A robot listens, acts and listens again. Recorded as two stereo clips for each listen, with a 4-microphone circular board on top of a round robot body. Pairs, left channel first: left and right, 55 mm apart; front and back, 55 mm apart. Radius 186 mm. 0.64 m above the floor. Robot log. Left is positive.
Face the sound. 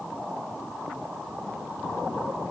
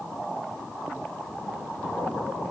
cmd idle
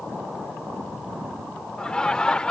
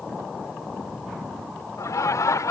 note: The laughter: 15° left.
cmd yaw +15
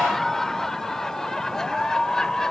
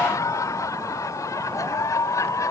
note: The laughter is now 10° left.
cmd yaw +10
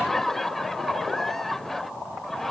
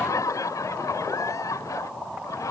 end: Facing the laughter.